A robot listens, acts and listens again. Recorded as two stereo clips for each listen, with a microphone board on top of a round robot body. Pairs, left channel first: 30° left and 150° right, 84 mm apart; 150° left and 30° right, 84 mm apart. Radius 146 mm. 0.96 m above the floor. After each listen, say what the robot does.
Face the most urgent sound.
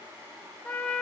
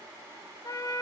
Keep listening.
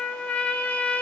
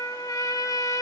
Keep listening.
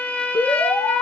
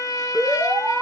Turn 45° left.
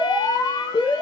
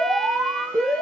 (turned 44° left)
Found it: an alarm, straight ahead.